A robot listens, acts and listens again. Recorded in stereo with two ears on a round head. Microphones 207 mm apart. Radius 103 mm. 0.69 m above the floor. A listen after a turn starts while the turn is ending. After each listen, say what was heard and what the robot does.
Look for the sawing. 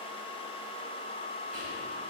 Keep listening.
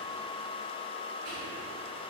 Keep listening.
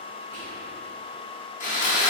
The sawing: about 35° left or 145° left. Turn 35° left.
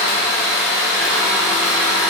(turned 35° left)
Facing the sawing, under 1 m away.